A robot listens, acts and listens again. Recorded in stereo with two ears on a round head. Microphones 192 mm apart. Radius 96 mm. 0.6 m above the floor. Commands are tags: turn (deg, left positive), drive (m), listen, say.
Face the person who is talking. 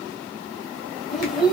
<turn deg="30"/>
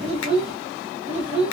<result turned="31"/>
<turn deg="-30"/>
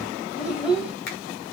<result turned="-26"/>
<say>Facing the child speaking.</say>